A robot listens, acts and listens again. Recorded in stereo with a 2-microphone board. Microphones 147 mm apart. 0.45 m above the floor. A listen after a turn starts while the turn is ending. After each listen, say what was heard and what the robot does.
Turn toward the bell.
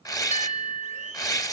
The bell: about 55° left or 125° left. Turn 55° left.
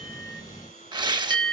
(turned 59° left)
So it is at 10° left. Turn 10° left.
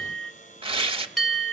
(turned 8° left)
Found it: a bell, straight ahead, 2 to 4 m away.